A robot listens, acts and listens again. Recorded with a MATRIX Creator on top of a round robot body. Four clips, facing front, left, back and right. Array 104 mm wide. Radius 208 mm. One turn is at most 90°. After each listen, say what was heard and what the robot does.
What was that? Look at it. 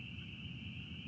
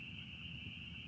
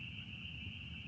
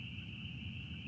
Keep listening.
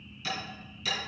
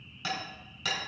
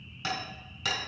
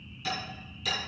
The hammering: 150° left. Turn 90° left.
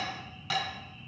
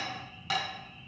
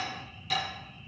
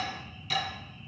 The hammering is now 60° left. Turn 60° left.
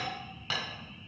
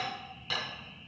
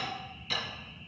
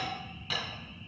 Found it: hammering, straight ahead.